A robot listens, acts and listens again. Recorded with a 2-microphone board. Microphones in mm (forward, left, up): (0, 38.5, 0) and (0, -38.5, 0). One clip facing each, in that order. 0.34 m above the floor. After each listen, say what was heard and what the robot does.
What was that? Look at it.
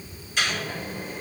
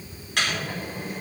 The microwave: about 65° right or 115° right. Turn 65° right.
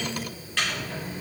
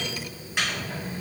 So it is at 20° right. Turn 20° right.
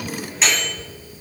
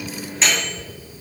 Facing the microwave.